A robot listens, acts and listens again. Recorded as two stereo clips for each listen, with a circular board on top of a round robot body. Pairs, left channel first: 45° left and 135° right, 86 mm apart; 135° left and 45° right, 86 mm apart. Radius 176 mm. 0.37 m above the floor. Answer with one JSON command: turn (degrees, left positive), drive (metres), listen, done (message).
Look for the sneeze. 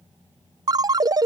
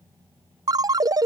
{"listen": true}
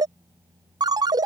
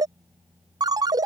{"listen": true}
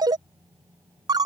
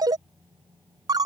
{"done": "I can't make out a sneeze, only a ringtone."}